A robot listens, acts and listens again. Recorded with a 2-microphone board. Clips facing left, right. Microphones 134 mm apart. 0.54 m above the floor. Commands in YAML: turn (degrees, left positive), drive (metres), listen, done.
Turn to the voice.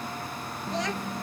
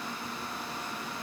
turn: 70
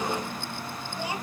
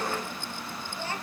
turn: 10
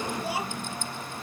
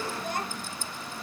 done: "Facing the child speaking."